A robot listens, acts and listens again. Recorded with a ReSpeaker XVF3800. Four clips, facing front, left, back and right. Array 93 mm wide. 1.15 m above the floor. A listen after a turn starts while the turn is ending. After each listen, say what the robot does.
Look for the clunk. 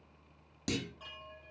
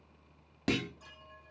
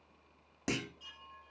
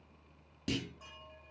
Turn 115° left.
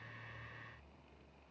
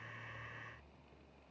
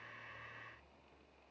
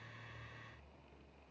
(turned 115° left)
I heard a clunk from this way, but can't make it out now.